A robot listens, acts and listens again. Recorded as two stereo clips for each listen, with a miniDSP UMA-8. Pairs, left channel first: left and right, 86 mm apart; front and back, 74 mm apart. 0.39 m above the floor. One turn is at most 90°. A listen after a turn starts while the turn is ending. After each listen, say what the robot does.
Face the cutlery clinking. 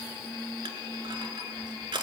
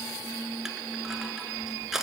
Keep listening.
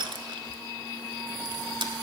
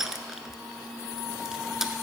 Keep listening.
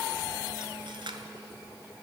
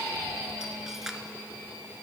I can't make out cutlery clinking, only crushing.